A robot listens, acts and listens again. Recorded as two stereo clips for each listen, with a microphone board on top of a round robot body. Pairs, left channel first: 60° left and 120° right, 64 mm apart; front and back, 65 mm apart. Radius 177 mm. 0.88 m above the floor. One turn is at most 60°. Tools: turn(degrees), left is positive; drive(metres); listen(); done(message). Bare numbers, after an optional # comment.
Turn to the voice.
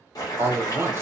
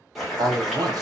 # The man speaking: 170° right.
turn(-60)
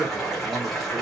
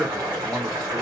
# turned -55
# Nothing new. It was at 115° right.
turn(-60)
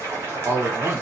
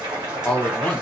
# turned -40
# The man speaking is now 70° right.
turn(-60)
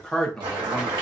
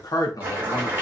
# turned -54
# The man speaking is now 20° right.
turn(-20)
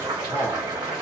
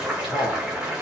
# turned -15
done("Facing the man speaking.")